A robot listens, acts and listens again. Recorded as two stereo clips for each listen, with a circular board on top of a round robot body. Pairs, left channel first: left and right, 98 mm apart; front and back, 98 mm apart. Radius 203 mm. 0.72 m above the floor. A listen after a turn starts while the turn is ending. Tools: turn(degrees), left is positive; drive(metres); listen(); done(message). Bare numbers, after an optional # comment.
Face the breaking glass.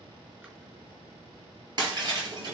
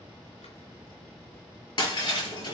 # The breaking glass: 45° right.
turn(-45)
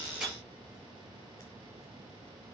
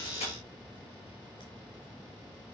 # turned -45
done("Facing where the breaking glass came from. I can't hear it now.")